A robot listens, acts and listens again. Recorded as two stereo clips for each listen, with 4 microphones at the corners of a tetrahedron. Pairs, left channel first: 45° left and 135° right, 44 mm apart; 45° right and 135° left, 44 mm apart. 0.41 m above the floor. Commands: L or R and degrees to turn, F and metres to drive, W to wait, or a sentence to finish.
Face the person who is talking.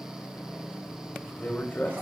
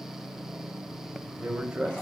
L70
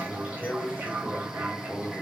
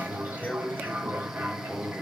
Facing the man speaking.